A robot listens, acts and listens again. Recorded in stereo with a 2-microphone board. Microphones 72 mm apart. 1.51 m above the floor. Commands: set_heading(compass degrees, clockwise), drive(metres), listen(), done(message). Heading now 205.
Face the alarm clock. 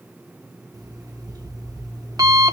set_heading(265)
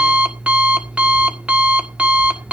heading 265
set_heading(285)
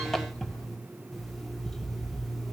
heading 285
done("Found it: an alarm clock, straight ahead.")